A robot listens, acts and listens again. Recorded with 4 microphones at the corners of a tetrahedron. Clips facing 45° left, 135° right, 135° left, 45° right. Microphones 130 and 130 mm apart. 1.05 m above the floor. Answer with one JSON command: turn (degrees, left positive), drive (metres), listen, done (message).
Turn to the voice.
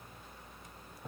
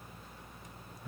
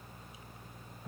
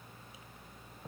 {"listen": true}
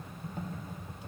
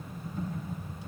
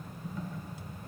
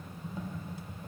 {"listen": true}
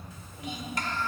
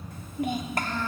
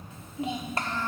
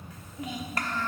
{"turn": -165}
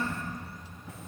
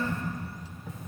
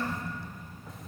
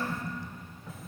{"turn": 40}
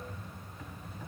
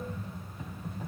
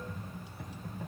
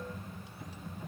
{"listen": true}
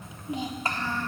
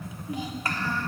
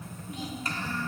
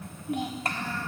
{"turn": -20}
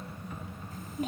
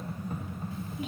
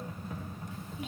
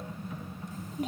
{"done": "Found it: a child speaking, straight ahead, 1 to 2 m away."}